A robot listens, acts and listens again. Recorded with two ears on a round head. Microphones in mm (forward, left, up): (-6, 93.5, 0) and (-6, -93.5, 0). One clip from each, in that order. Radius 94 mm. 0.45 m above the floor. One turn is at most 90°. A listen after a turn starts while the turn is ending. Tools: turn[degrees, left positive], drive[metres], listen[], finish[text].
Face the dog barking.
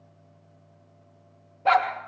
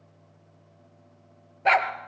Thought: The dog barking: about 55° right or 125° right.
Action: turn[-55]
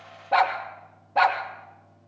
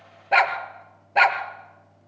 Thought: So it is at 70° right.
Action: turn[-70]
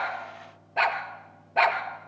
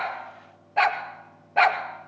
Action: finish[Facing the dog barking, 2 to 4 m away.]